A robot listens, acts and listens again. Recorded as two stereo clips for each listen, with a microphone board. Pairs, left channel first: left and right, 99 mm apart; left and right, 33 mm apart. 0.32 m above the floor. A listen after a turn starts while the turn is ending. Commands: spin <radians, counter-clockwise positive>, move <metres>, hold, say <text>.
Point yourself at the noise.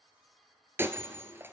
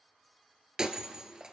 spin -0.44
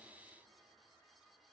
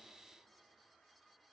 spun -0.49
hold
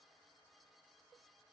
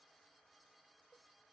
say I heard breaking glass, but can't make it out now. It was about 5° left or 130° right.